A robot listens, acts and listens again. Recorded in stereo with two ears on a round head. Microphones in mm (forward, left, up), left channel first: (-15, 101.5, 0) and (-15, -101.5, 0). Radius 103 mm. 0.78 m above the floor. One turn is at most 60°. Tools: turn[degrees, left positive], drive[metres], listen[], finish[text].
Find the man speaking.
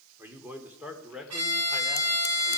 Action: turn[-30]
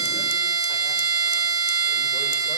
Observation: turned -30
Action: listen[]
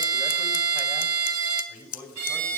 Action: turn[-30]
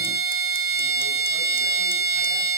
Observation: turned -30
Action: listen[]
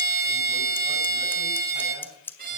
Action: listen[]
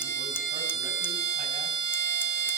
Action: finish[I heard a man speaking, but can't make it out now. It was about 20° left or 140° right.]